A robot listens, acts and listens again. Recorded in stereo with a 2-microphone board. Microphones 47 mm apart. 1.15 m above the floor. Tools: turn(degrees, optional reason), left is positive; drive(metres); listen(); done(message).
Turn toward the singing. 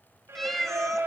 turn(degrees=-90)
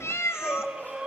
turn(degrees=-15, reason="So it is at 15° right.")
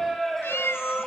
done("Found it: singing, straight ahead.")